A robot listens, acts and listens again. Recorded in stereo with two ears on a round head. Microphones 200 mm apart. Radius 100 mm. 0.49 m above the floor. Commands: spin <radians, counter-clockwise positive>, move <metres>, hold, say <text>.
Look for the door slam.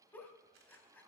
hold
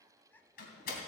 spin 0.70
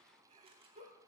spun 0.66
hold
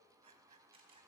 say I heard a door slam, but can't make it out now. It was about 5° left or 100° left.